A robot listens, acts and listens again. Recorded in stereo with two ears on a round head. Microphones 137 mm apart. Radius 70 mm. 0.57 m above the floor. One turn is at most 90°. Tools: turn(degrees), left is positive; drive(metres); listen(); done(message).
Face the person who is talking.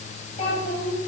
turn(degrees=40)
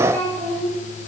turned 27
turn(degrees=10)
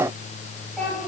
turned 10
done("Facing the child speaking.")